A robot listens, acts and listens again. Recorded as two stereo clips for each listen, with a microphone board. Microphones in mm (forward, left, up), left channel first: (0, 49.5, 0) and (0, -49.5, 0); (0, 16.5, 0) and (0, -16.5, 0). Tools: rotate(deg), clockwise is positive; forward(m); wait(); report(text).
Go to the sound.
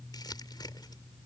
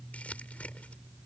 rotate(-45)
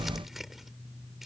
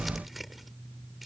forward(1.0)
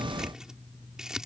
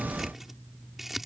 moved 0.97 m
forward(1.0)
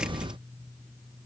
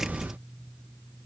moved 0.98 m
wait()
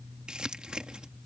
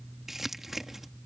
rotate(10)
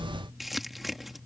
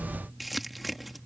forward(1.0)
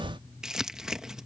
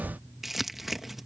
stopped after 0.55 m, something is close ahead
report("I am next to the crumpling.")